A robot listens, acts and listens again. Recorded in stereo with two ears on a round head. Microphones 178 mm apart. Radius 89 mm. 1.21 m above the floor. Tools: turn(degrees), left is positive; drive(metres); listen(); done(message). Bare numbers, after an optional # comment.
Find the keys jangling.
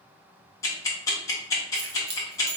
# The keys jangling: about 55° right or 125° right.
turn(-55)
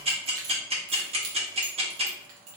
# So it is at 75° right.
turn(-75)
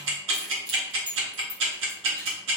# The keys jangling is now 25° right.
turn(-25)
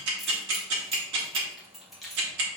done("Found it: keys jangling, straight ahead, 1 to 2 m away.")